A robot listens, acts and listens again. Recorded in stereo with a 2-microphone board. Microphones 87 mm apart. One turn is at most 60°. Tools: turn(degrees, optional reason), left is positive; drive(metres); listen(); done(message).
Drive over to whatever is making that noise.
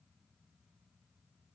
listen()
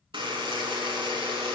turn(degrees=-60, reason="The buzzer: about 75° right or 105° right.")
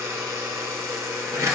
turn(degrees=-35, reason="So it is at 35° right.")
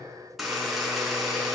drive(metres=1.0)
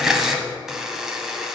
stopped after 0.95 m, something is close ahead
done("I am next to the buzzer.")